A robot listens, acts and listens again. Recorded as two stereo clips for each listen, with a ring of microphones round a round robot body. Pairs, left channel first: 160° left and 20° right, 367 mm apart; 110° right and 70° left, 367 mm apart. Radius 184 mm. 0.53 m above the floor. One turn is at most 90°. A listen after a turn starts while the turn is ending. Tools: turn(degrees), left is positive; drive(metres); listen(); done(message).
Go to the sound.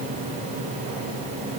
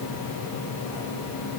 listen()
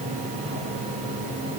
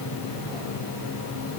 listen()
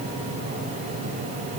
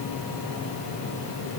done("I can't make out anything to turn to.")